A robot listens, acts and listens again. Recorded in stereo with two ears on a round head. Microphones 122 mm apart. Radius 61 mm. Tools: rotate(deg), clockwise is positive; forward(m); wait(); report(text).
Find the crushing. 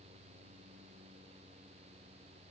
wait()
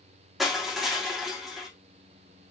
rotate(-30)
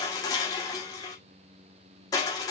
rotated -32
rotate(-150)
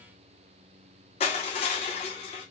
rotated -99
rotate(-55)
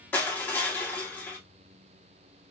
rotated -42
rotate(-15)
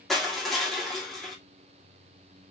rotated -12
report("Found it: crushing, straight ahead.")